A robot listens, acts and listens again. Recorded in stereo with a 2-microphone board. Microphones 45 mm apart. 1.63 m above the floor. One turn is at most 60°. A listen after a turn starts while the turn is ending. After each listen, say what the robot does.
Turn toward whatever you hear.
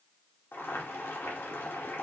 Turn 60° left.
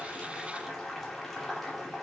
Turn 10° left.
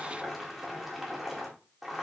Found it: boiling, straight ahead, 2 to 4 m away.